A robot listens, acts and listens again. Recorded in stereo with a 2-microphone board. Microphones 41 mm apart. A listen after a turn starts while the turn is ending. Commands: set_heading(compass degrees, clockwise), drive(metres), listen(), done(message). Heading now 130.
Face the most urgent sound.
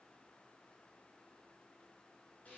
listen()
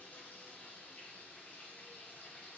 listen()
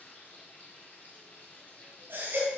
set_heading(180)
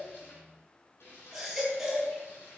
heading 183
done("Facing the baby crying, over 4 m away.")